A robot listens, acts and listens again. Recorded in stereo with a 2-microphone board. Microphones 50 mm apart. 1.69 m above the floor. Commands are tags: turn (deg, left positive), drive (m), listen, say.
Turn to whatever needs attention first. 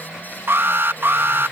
<turn deg="-55"/>
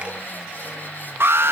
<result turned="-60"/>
<turn deg="-65"/>
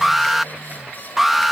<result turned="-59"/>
<say>Found it: an alarm, straight ahead.</say>